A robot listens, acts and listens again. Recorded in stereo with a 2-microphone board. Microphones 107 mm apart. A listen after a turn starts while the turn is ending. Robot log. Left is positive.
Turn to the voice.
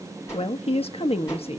note: The woman speaking: about 65° left or 115° left.
cmd yaw +65
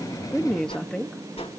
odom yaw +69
note: So it is at 10° left.
cmd yaw +10
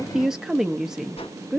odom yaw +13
end: Found it: a woman speaking, straight ahead, under 1 m away.